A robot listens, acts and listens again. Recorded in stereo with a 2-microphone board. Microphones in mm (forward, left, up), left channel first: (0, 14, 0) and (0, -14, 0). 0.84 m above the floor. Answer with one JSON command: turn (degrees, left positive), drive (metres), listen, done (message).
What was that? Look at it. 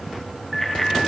{"turn": 30}
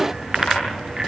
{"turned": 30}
{"turn": -20}
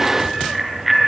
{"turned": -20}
{"done": "Found it: a bicycle bell, straight ahead."}